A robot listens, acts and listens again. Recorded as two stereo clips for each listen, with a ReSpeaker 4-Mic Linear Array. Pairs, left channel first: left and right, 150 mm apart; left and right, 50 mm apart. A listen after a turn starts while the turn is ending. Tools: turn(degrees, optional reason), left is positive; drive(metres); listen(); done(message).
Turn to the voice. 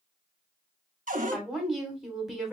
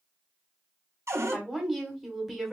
turn(degrees=30)
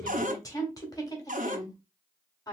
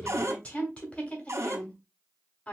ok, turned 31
turn(degrees=150, reason="So it is at 150° left.")
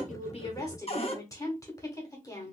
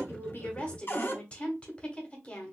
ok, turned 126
turn(degrees=25, reason="The woman speaking is now 25° left.")
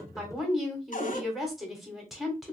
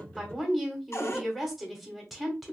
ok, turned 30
done("Found it: a woman speaking, straight ahead, 1 to 2 m away.")